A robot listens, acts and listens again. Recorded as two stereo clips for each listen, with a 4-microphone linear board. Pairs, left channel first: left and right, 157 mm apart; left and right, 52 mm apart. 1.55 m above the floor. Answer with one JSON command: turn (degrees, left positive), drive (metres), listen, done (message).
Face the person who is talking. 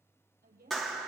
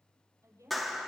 {"turn": -90}
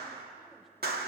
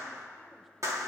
{"listen": true}
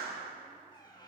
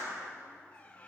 {"listen": true}
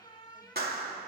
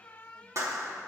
{"done": "I heard a woman speaking from this way, but can't make it out now."}